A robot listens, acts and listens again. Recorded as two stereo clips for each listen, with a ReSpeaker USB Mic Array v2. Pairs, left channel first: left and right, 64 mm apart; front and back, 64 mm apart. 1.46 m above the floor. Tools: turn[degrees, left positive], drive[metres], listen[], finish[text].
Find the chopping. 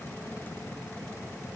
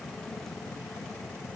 Action: listen[]
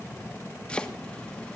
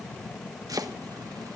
Thought: The chopping: 165° left.
Action: turn[165]
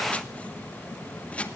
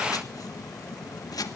Thought: The chopping is now 20° left.
Action: turn[20]
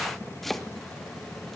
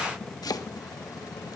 Action: finish[Facing the chopping, 1 to 2 m away.]